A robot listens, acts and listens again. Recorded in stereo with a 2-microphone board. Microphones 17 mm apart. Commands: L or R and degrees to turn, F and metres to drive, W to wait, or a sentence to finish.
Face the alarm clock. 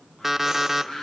R30
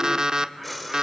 R135
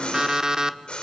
R40
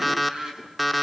Facing the alarm clock.